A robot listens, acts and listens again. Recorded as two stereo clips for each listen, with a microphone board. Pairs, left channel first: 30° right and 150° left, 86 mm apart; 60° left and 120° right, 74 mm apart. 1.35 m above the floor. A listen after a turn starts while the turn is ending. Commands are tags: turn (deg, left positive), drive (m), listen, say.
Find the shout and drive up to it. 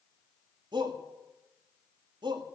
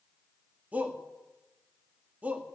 <turn deg="170"/>
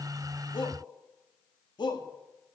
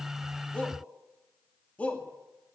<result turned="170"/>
<turn deg="-10"/>
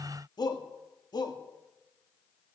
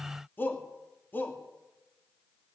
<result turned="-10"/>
<drive m="1.0"/>
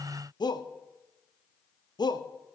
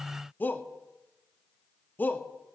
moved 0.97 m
<drive m="1.0"/>
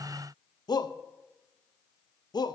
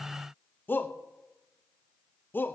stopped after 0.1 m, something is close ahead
<say>Arrived at the shout, straight ahead.</say>